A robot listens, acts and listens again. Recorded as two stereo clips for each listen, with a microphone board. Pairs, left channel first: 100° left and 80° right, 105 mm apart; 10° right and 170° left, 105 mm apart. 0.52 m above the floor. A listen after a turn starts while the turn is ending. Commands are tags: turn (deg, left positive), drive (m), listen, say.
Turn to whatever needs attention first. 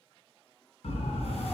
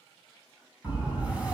<turn deg="90"/>
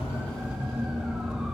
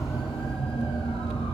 <say>Facing the siren.</say>